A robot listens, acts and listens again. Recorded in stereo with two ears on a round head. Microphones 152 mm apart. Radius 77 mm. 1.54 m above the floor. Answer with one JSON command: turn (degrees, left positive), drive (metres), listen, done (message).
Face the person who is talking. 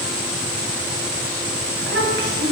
{"turn": -60}
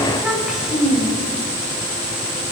{"done": "Found it: a child speaking, straight ahead, over 4 m away."}